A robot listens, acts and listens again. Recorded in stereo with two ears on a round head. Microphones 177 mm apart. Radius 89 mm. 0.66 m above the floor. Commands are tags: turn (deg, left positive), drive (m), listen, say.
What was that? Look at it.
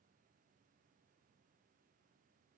<listen/>
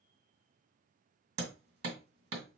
<turn deg="-70"/>
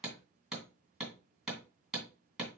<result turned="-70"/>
<say>Facing the hammering, 2 to 4 m away.</say>